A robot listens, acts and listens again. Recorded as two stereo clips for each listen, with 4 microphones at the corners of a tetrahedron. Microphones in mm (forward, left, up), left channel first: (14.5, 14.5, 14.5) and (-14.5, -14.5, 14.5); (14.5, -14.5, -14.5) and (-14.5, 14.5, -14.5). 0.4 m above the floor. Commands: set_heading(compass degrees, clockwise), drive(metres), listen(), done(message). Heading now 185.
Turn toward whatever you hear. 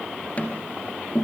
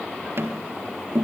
set_heading(80)
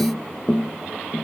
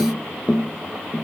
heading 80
done("Found it: tapping, straight ahead, 1 to 2 m away.")